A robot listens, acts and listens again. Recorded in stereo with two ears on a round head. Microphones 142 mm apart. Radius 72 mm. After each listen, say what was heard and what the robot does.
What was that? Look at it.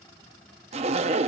The zipper: about 40° right or 140° right. Turn 40° right.
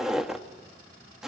Found it: a zipper, straight ahead.